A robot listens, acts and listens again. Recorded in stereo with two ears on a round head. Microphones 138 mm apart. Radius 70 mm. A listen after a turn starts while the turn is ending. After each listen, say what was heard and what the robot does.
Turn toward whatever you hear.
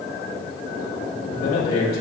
The man speaking: about 70° left or 110° left. Turn 70° left.
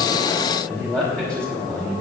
Facing the man speaking, over 4 m away.